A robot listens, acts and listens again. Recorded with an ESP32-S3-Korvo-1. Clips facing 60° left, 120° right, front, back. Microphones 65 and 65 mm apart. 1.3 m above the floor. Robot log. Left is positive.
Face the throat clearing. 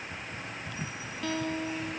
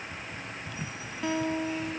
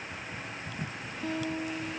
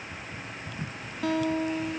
cmd idle
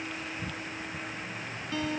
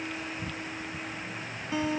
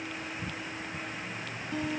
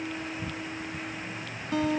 cmd idle
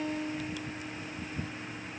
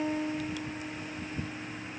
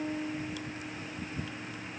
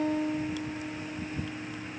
end: I can't make out throat clearing, only a guitar.